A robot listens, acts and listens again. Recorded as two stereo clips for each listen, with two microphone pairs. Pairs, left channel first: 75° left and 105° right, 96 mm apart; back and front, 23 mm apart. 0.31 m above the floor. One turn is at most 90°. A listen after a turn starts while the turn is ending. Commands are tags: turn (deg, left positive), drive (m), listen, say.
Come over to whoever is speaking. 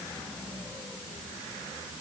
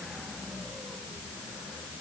<listen/>
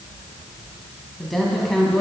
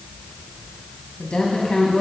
<turn deg="90"/>
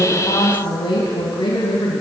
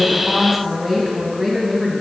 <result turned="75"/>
<turn deg="90"/>
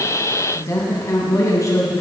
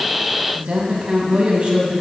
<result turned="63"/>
<turn deg="25"/>
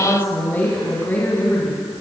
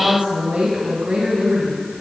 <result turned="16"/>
<turn deg="10"/>
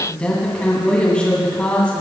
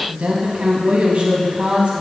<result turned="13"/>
<drive m="1.0"/>
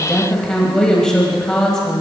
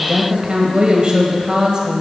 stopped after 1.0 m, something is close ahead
<say>Arrived at the woman speaking, straight ahead.</say>